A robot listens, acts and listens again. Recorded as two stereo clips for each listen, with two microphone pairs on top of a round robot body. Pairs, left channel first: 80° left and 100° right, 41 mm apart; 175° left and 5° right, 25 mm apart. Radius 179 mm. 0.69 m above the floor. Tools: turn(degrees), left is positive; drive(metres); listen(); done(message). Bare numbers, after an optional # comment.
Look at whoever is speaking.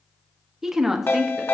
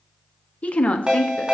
# The woman speaking: straight behind.
turn(180)
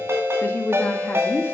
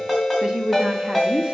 # The woman speaking is now 45° left.
turn(45)
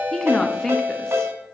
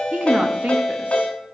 done("Found it: a woman speaking, straight ahead, 1 to 2 m away.")